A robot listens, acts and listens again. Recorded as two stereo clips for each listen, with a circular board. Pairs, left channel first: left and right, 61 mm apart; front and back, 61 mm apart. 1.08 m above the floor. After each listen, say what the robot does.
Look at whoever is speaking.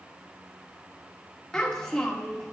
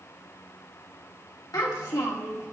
Facing the child speaking.